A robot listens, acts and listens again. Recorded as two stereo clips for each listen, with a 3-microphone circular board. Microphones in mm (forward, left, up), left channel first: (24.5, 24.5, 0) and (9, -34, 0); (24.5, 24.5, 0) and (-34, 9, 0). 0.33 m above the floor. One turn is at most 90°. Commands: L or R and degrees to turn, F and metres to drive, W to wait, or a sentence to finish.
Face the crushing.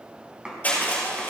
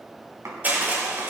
L90
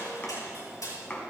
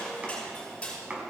L85
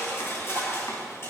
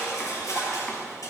L35
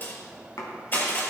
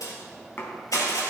L20
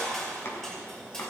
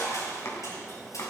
Found it: crushing, straight ahead, over 4 m away.